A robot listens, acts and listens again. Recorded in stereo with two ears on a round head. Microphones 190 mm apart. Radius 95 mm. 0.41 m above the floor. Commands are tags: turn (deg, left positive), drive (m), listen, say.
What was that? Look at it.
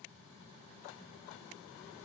<listen/>
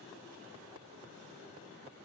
<listen/>
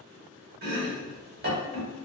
<turn deg="-45"/>
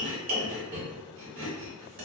<turn deg="-80"/>
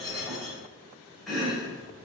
<say>Found it: chopping, straight ahead.</say>